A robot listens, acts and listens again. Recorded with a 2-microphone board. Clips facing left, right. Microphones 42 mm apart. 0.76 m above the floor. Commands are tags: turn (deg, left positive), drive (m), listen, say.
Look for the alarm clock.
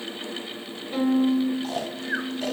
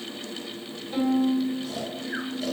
<listen/>
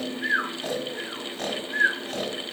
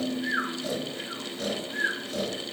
<listen/>
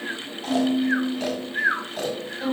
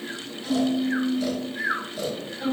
<say>I can't make out an alarm clock to turn to.</say>